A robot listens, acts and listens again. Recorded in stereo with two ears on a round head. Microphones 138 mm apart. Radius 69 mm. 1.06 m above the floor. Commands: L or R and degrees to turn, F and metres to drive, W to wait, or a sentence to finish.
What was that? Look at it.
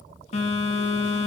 L40
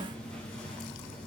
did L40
L10
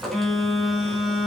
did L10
Facing the phone buzzing.